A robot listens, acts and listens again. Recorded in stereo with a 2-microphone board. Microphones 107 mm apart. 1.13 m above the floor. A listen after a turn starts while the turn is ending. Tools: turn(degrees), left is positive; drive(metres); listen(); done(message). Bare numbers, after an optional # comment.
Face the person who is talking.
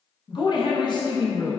# The woman speaking: about 45° left or 135° left.
turn(45)
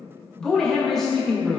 done("Facing the woman speaking, under 1 m away.")